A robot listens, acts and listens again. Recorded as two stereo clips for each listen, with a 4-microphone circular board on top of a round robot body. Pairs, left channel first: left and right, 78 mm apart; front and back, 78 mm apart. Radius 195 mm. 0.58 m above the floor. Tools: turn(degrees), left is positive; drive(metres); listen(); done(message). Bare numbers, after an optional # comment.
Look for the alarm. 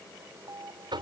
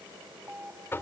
# The alarm: 115° right.
turn(-115)
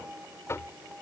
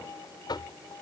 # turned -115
# The alarm is now 15° right.
turn(-15)
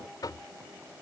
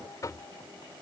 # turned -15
listen()
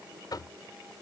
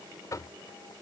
listen()
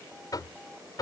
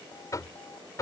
done("I heard an alarm from this way, but can't make it out now.")